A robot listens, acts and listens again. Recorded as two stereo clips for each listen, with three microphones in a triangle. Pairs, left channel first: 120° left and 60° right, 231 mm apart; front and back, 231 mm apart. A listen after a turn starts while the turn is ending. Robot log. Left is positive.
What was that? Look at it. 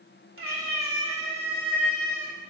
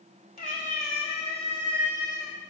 note: The cat meowing: 75° right.
cmd yaw -75
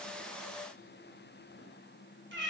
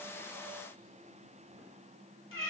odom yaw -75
note: The cat meowing is now 25° right.
cmd yaw -25
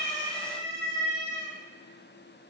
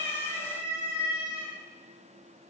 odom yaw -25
end: Facing the cat meowing, 2 to 4 m away.